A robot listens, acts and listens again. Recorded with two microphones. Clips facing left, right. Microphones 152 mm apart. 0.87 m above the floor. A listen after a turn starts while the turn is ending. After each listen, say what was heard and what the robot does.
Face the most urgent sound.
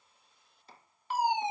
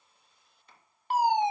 The fire alarm: about 60° right or 120° right. Turn 60° right.
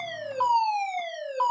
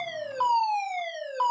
Facing the fire alarm, over 4 m away.